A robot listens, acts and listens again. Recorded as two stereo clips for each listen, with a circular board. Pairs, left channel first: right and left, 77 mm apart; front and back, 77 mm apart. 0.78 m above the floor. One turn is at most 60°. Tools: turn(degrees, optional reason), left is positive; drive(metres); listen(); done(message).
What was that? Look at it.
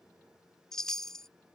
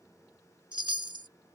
turn(degrees=-60, reason="The chime: 175° right.")
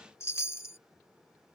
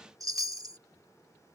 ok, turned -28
turn(degrees=-60, reason="The chime is now 145° right.")
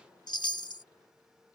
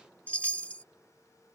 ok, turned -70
turn(degrees=-60, reason="The chime is now 70° right.")
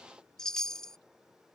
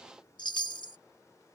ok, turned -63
turn(degrees=-10, reason="The chime is now 10° right.")
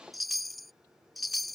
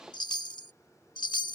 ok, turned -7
done("Facing the chime.")